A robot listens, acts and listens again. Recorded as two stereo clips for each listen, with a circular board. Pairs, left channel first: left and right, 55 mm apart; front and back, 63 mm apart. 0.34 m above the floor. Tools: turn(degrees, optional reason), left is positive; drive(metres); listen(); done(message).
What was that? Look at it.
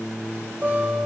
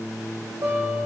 turn(degrees=-145, reason="The guitar: 145° right.")
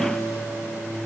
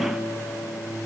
listen()
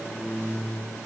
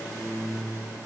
listen()
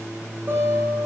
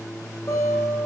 turn(degrees=-35, reason="The guitar is now 35° right.")
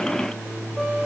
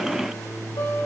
done("Facing the guitar.")